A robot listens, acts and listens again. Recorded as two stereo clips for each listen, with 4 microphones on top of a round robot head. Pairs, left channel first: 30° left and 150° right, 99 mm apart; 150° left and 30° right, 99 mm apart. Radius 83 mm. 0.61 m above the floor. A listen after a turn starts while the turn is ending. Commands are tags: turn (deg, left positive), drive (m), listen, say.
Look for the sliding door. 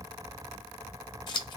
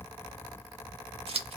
<listen/>
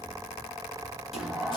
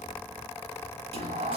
<turn deg="-60"/>
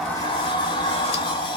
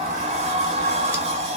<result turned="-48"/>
<turn deg="-15"/>
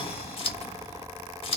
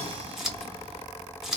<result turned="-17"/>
<listen/>
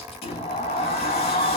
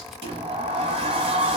<say>Facing the sliding door, under 1 m away.</say>